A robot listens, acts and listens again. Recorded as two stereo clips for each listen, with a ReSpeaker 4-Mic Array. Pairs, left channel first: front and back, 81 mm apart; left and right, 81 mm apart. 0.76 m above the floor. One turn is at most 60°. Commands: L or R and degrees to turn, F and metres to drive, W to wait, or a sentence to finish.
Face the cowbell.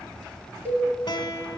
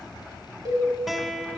R60
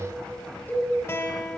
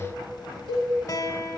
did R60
R60
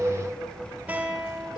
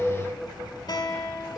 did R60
W
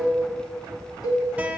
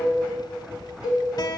Facing the cowbell.